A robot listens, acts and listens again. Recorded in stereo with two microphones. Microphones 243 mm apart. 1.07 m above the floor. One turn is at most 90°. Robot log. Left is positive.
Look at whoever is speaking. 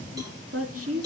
note: The woman speaking: about 70° right or 110° right.
cmd yaw -70
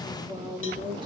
note: So it is at 20° right.
cmd yaw -20
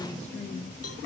note: The woman speaking is now 10° left.
cmd yaw +10
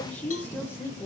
note: The woman speaking is now 10° left.
cmd yaw +10
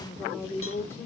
note: The woman speaking is now 10° left.
cmd yaw +10
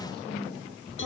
end: Facing the woman speaking, 2 to 4 m away.